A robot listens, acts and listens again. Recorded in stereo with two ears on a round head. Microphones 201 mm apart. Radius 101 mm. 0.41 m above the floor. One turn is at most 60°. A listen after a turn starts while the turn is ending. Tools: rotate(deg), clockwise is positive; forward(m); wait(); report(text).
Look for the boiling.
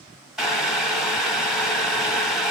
rotate(-30)
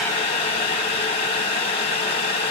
rotate(-60)
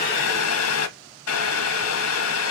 rotate(-60)
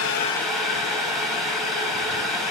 report("Facing the boiling.")